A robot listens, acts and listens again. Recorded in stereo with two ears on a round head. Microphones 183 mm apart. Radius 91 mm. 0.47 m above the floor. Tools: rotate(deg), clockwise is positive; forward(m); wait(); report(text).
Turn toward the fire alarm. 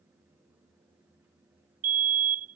rotate(40)
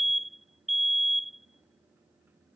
report("Facing the fire alarm.")